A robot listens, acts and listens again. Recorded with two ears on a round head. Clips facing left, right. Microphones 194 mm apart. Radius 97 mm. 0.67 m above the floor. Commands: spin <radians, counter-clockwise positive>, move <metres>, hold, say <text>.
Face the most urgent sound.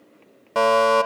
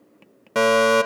spin -0.44
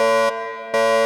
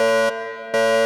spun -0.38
say Found it: a fire alarm, straight ahead.